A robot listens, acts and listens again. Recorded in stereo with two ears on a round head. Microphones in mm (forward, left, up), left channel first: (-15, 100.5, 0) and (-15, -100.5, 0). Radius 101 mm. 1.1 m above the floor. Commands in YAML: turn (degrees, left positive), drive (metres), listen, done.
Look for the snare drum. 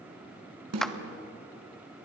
turn: -90
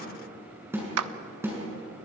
turn: -10
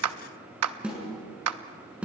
done: "Facing the snare drum."